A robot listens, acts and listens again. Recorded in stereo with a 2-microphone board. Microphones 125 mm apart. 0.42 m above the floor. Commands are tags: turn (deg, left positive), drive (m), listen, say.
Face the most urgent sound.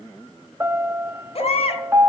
<turn deg="55"/>
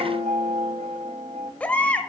<turn deg="15"/>
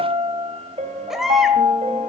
<say>Found it: a baby crying, straight ahead.</say>